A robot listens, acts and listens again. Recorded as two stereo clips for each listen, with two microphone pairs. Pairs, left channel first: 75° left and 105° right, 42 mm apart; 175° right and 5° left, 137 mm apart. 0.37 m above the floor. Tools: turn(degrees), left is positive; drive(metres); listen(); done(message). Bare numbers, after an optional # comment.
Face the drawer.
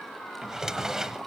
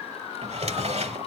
# The drawer: 25° right.
turn(-25)
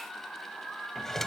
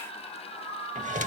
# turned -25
done("Found it: a drawer, straight ahead, under 1 m away.")